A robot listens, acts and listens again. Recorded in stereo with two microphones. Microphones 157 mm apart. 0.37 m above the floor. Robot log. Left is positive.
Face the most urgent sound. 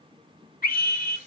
note: The scream: about 65° left or 115° left.
cmd yaw +65
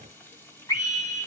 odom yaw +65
note: So it is at 25° left.
cmd yaw +25
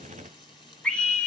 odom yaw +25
end: Facing the scream, 2 to 4 m away.